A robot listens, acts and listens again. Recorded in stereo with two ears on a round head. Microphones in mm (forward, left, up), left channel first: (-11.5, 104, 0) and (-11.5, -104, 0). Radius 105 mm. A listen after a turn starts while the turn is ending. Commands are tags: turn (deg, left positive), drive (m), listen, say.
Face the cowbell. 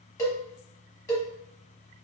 <turn deg="30"/>
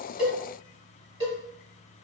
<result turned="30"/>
<turn deg="-20"/>
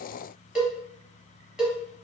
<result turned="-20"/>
<say>Found it: a cowbell, straight ahead.</say>